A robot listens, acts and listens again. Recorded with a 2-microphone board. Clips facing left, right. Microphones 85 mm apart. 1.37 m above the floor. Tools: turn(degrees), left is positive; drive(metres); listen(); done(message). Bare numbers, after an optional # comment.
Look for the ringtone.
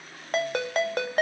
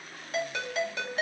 # The ringtone: about 55° left or 125° left.
turn(55)
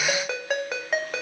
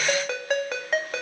done("Found it: a ringtone, straight ahead.")